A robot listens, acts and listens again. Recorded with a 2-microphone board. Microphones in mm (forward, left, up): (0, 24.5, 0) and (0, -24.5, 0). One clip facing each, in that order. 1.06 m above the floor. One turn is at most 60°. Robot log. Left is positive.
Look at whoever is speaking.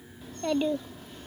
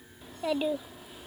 cmd yaw -30
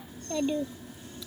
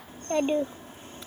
note: So it is at 140° right.
cmd yaw -60
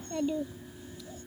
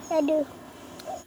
note: The child speaking is now 85° right.
cmd yaw -60
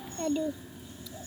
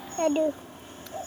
note: The child speaking is now 50° right.
cmd yaw -50
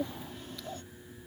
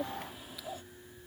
end: Found it: a child speaking, straight ahead.